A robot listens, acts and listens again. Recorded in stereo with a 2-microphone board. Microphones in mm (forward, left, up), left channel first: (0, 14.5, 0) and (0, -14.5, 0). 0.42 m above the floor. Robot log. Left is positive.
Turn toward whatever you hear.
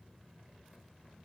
cmd idle
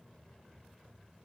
cmd idle
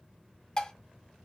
note: The dishes clattering: about 25° left or 155° left.
cmd yaw +25
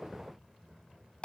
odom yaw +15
note: So it is at 145° left.
cmd yaw +145
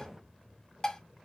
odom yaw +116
note: The dishes clattering is now 25° left.
cmd yaw +25
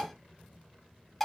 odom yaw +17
note: The dishes clattering is now 10° left.
cmd yaw +10
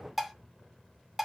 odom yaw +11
end: Facing the dishes clattering, 1 to 2 m away.